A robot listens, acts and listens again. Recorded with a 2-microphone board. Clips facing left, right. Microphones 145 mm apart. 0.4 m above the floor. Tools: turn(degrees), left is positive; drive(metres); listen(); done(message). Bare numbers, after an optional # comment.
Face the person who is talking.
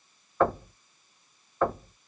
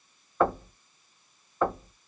listen()
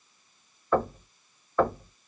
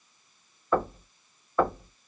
listen()
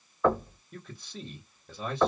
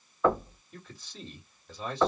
# The man speaking: about 50° left or 130° left.
turn(50)
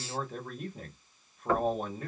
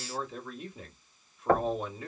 # So it is at 65° left.
turn(65)
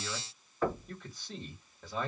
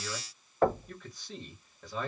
done("Found it: a man speaking, straight ahead.")